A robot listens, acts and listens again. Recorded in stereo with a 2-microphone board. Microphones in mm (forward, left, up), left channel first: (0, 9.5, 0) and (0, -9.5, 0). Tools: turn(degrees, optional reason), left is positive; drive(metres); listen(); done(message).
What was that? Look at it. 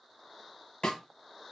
turn(degrees=55, reason="The snare drum: about 55° left or 125° left.")
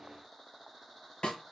turn(degrees=70, reason="So it is at 70° left.")
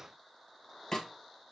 turn(degrees=35, reason="The snare drum is now 35° left.")
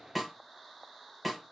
done("Found it: a snare drum, straight ahead.")